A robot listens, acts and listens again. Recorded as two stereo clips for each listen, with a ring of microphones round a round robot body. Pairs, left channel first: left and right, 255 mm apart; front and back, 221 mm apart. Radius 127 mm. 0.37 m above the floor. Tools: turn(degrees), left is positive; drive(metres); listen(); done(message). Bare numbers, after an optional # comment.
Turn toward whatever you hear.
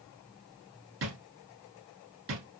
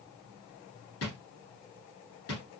# The drawer: 45° right.
turn(-45)
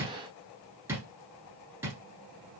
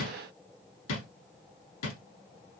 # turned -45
# The drawer is now 10° right.
turn(-10)
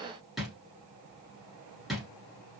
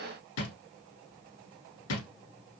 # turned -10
done("Found it: a drawer, straight ahead, 1 to 2 m away.")